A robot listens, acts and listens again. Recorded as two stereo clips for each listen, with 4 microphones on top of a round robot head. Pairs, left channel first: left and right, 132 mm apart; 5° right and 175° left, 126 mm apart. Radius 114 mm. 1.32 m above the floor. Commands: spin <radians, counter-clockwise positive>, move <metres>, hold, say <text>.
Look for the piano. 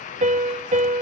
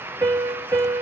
spin -2.01
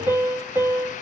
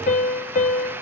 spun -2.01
spin -0.26
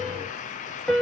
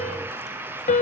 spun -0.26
say Found it: a piano, straight ahead.